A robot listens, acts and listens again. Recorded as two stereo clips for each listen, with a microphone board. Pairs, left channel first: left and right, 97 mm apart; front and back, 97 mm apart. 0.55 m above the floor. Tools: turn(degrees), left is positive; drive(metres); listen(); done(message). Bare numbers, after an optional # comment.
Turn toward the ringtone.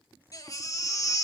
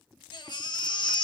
listen()
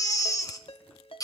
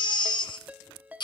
# The ringtone: 105° left.
turn(105)
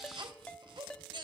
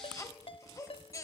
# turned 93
# The ringtone is now 10° left.
turn(10)
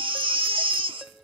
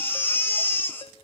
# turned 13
listen()
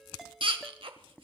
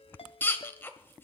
done("Facing the ringtone.")